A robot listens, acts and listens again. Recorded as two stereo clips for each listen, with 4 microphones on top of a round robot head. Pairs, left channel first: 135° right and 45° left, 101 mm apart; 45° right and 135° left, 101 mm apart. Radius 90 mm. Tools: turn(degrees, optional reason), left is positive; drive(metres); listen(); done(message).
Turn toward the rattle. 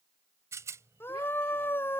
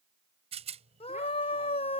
turn(degrees=110, reason="The rattle: 110° left.")
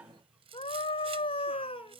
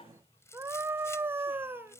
turn(degrees=15, reason="The rattle is now 15° left.")
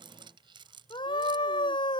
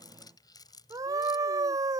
done("Facing the rattle.")